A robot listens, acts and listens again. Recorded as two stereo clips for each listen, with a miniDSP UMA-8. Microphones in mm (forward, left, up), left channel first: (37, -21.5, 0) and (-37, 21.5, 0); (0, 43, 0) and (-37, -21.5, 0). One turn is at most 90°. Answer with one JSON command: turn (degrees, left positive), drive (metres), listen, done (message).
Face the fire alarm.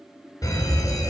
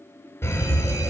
{"turn": 10}
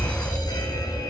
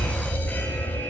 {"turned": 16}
{"done": "Facing the fire alarm."}